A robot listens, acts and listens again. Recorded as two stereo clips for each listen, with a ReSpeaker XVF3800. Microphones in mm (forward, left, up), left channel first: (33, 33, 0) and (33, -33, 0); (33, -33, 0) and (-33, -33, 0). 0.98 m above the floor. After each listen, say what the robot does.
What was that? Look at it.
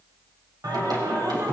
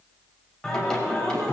Turn 80° right.
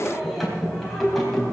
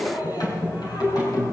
Found it: singing, straight ahead, over 4 m away.